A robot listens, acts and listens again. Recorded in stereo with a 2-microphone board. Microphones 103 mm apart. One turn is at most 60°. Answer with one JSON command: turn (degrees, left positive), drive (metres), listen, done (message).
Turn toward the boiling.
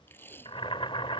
{"turn": 60}
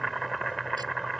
{"done": "Found it: boiling, straight ahead."}